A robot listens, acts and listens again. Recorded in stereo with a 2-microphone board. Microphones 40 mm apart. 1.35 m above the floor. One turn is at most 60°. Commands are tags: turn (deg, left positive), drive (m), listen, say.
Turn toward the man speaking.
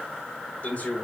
<turn deg="35"/>
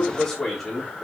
<turn deg="10"/>
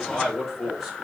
<say>Facing the man speaking.</say>